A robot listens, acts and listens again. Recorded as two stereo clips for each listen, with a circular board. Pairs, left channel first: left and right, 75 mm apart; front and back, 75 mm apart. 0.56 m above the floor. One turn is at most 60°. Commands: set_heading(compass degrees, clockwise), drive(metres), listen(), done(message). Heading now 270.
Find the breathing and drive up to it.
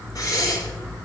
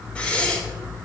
set_heading(210)
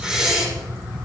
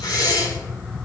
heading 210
set_heading(220)
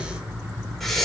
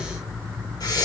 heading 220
drive(1.0)
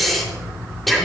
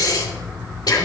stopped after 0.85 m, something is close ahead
done("Blocked. The breathing is further on, straight ahead.")